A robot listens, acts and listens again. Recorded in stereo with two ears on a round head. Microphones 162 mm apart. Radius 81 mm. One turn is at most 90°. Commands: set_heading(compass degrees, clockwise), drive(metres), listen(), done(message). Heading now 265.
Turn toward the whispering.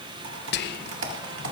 set_heading(205)
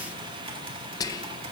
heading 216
set_heading(191)
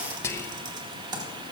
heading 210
set_heading(195)
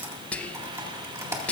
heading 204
set_heading(194)
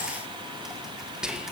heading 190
done("Found it: whispering, straight ahead, under 1 m away.")